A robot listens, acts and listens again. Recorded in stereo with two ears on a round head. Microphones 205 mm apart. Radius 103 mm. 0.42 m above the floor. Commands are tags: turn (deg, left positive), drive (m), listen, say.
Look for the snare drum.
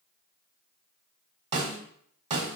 <turn deg="-30"/>
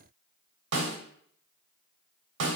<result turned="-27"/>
<turn deg="-120"/>
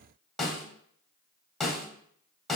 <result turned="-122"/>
<say>Found it: a snare drum, straight ahead.</say>